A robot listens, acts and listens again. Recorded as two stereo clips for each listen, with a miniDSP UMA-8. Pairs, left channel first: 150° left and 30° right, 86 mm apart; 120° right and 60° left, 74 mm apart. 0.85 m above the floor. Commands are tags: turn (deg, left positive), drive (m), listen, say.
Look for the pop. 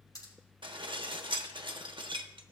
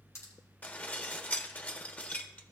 <turn deg="-170"/>
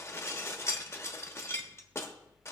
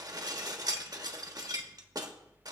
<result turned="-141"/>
<turn deg="-30"/>
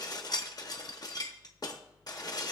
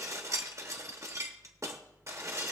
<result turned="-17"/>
<turn deg="-10"/>
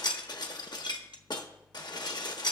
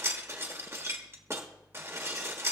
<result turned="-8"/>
<say>Facing where the pop came from. I can't hear it now.</say>